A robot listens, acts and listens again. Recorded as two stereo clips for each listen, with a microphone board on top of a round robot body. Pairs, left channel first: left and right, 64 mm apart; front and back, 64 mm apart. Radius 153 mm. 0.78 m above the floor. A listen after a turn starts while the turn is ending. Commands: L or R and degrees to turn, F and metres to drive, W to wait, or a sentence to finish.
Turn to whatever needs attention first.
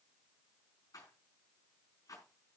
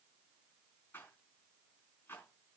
W
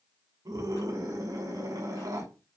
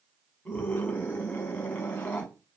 R65
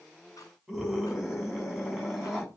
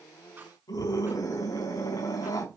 Facing the scream.